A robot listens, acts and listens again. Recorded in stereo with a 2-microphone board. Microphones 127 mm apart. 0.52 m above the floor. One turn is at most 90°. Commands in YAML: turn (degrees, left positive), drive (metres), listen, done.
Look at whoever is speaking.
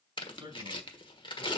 turn: -35
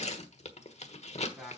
done: "Found it: a man speaking, straight ahead."